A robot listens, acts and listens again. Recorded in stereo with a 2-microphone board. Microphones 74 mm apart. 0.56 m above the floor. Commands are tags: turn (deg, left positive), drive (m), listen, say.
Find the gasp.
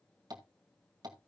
<listen/>
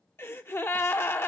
<turn deg="35"/>
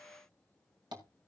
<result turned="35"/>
<listen/>
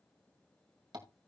<say>I heard a gasp, but can't make it out now. It was about straight ahead or 110° left.</say>